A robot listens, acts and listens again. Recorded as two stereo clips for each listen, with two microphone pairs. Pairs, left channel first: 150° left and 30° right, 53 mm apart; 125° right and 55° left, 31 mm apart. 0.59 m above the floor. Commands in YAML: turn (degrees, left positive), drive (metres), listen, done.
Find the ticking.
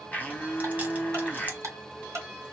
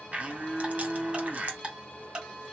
done: "Facing the ticking."